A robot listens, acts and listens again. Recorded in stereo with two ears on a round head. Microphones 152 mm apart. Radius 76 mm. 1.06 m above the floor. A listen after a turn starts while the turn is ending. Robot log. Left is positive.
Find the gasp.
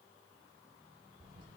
cmd idle
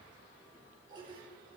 cmd idle
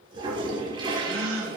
cmd yaw -90
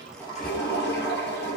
end: Facing where the gasp came from. I can't hear it now.